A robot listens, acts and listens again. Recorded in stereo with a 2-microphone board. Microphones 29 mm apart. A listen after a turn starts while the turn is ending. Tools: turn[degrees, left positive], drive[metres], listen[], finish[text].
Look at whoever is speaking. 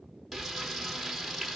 Action: listen[]
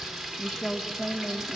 Thought: The woman speaking: about 45° left or 135° left.
Action: turn[45]
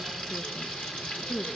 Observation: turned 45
Thought: So it is at 90° left.
Action: turn[90]
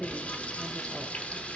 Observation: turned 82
Action: listen[]
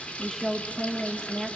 Action: finish[Found it: a woman speaking, straight ahead, 1 to 2 m away.]